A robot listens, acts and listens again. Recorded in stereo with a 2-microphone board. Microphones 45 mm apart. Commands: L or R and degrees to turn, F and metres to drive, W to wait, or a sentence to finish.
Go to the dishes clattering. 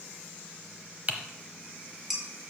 R30
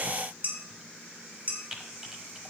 R145
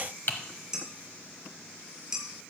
R15
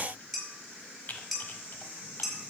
F1.0
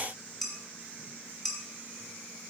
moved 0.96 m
F1.0
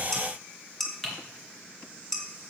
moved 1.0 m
F1.0
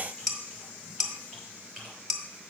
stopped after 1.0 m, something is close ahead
Arrived at the dishes clattering, straight ahead.